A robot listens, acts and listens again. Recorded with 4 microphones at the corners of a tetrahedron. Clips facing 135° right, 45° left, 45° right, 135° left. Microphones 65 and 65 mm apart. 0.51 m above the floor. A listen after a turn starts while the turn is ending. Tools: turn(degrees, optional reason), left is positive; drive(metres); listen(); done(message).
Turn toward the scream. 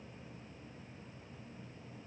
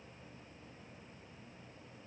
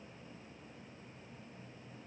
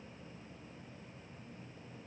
listen()
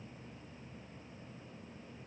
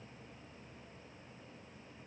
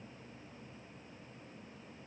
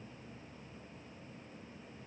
listen()
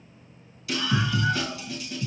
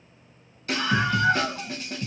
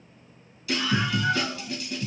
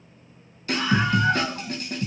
turn(degrees=90, reason="The scream: 90° left.")
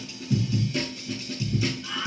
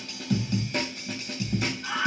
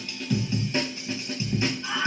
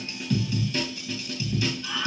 turn(degrees=10, reason="The scream is now 10° left.")
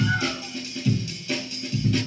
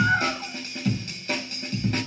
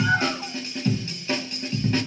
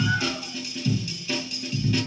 done("Facing the scream, 2 to 4 m away.")